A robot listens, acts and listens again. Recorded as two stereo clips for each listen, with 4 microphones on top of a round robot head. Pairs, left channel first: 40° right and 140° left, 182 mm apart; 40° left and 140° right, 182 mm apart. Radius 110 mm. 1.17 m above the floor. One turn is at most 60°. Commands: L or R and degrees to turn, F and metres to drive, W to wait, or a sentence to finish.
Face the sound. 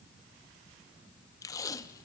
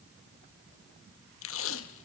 L35
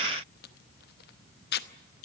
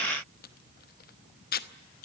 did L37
Found it: tape being pulled, straight ahead.